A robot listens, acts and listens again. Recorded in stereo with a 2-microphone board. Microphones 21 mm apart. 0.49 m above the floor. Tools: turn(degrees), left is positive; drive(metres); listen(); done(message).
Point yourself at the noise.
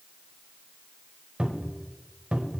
turn(degrees=-65)
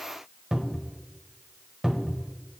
turn(degrees=-35)
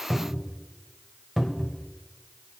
turn(degrees=-10)
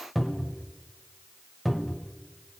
done("Facing the cupboard door, 1 to 2 m away.")